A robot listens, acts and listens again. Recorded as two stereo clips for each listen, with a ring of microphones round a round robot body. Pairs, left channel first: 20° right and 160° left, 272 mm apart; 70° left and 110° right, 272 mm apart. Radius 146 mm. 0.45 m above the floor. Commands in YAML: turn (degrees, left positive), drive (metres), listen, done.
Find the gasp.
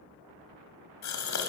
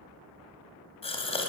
done: "Found it: a gasp, straight ahead."